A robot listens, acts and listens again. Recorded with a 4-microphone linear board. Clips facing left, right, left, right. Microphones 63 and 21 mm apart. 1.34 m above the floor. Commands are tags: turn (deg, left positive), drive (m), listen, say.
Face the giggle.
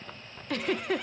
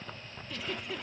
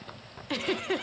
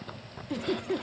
<turn deg="65"/>
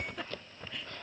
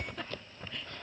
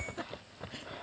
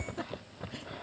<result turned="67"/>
<say>Facing the giggle.</say>